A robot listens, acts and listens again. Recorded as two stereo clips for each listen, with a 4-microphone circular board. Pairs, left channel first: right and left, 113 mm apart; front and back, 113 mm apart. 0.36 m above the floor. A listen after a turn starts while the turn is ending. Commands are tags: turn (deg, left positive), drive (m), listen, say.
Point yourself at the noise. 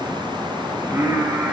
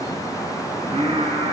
<turn deg="165"/>
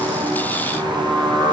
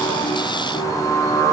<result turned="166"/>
<turn deg="35"/>
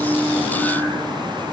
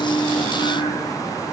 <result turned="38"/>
<say>Facing the singing, 2 to 4 m away.</say>